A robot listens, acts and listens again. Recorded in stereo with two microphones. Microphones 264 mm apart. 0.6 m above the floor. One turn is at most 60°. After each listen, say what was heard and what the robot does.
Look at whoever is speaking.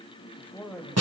Turn 30° left.
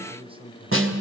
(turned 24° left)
So it is at 20° right. Turn 20° right.
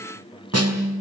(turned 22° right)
Keep listening.
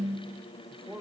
The man speaking is now 10° right. Turn 10° right.
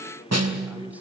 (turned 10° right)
Keep listening.
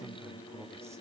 Keep listening.
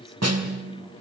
I heard a man speaking from this way, but can't make it out now.